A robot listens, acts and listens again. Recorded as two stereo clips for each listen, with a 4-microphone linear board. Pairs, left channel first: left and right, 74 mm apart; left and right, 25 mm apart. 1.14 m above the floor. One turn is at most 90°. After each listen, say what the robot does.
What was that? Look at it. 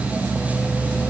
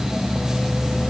Keep listening.
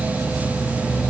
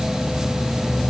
Keep listening.
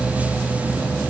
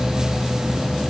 I can't make out anything to turn to.